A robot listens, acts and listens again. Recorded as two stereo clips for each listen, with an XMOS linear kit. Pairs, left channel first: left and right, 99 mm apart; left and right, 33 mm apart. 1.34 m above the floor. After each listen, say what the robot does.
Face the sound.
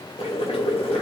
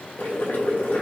Turn 90° left.
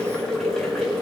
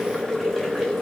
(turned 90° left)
Found it: boiling, straight ahead, 2 to 4 m away.